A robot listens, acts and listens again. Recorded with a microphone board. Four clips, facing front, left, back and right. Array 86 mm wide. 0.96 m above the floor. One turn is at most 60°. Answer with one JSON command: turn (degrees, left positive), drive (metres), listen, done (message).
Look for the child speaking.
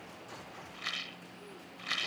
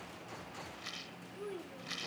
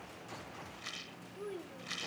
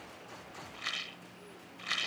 {"turn": 60}
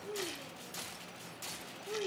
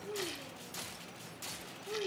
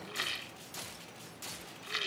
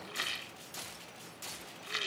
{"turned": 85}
{"turn": 50}
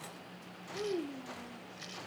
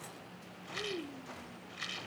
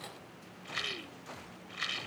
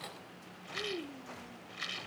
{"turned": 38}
{"turn": -10}
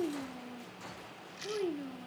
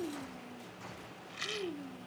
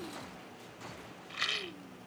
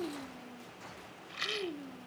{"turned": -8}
{"turn": -10}
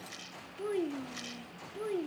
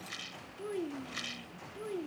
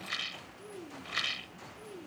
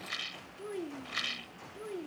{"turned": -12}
{"done": "Found it: a child speaking, straight ahead."}